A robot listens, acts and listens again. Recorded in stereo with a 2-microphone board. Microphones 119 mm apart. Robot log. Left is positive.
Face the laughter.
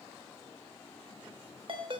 cmd idle
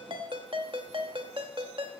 cmd idle
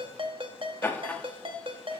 cmd yaw +30
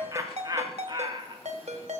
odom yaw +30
note: So it is at 45° right.
cmd yaw -45
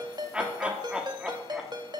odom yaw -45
note: The laughter is now 10° right.
cmd yaw -10
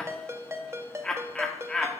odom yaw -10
end: Found it: laughter, straight ahead.